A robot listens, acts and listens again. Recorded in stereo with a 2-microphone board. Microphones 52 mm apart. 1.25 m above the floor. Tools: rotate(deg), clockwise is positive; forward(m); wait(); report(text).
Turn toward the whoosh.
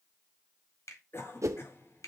rotate(75)
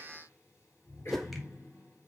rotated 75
report("Facing the whoosh, under 1 m away.")